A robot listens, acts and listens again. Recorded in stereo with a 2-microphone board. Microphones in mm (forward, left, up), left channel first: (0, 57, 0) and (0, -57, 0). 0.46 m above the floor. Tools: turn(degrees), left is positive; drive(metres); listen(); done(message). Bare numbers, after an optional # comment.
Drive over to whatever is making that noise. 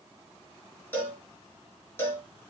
# The cowbell: about 20° left or 160° left.
turn(20)
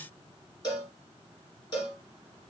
# So it is at 140° left.
turn(140)
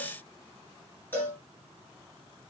# The cowbell is now 20° left.
turn(20)
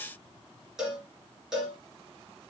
drive(1.0)
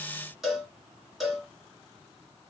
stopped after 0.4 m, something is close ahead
done("Something is in my way. I am facing the cowbell but have not reached it.")